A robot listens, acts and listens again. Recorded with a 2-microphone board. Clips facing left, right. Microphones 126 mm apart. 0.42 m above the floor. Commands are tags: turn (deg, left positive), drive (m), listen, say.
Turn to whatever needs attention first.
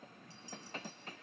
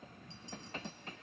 <listen/>
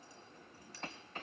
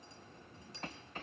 <listen/>
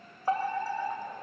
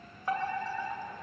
<turn deg="30"/>
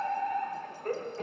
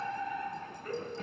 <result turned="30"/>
<turn deg="115"/>
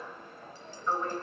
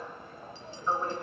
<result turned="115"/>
<turn deg="-15"/>
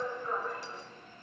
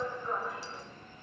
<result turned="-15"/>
<say>Facing the fire alarm.</say>